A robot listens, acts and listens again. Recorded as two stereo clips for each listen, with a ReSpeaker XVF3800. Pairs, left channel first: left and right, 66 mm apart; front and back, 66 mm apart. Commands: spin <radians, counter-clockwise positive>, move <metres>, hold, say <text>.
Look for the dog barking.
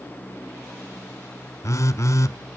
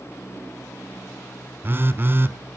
hold
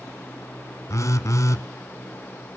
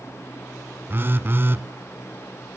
hold
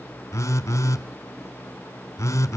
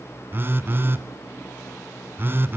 say I can't make out a dog barking to turn to.